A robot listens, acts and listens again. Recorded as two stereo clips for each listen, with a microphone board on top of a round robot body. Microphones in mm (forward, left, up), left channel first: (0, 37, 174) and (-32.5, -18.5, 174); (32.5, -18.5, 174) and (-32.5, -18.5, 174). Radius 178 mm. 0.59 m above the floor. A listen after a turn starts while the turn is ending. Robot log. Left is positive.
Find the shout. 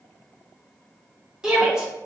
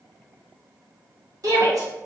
note: The shout: 160° left.
cmd yaw +160
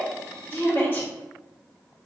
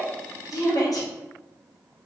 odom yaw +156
end: Facing the shout, 1 to 2 m away.